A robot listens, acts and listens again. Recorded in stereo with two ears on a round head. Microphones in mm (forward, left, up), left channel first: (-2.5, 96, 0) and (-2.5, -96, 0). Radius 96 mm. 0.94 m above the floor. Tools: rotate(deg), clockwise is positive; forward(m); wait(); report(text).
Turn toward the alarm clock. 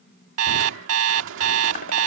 rotate(90)
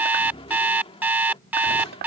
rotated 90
rotate(10)
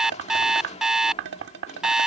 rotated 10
report("Facing the alarm clock.")